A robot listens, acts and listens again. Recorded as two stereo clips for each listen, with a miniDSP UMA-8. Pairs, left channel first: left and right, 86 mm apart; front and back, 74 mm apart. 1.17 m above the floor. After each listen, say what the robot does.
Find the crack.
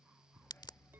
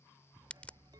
Turn 70° left.
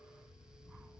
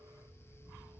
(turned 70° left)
Facing where the crack came from. I can't hear it now.